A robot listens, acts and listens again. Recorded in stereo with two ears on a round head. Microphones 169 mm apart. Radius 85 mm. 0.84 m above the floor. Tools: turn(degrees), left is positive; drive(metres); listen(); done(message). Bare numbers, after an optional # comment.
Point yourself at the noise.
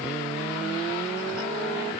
listen()
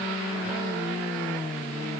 listen()
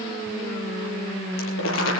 # The crumpling: about 75° left or 105° left.
turn(75)
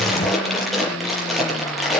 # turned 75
done("Found it: crumpling, straight ahead.")